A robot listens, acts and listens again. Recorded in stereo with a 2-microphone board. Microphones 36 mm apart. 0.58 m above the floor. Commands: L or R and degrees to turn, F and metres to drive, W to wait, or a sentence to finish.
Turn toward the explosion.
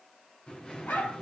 L30
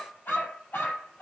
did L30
W
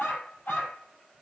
I heard an explosion, but can't make it out now. It was about straight ahead or 120° left.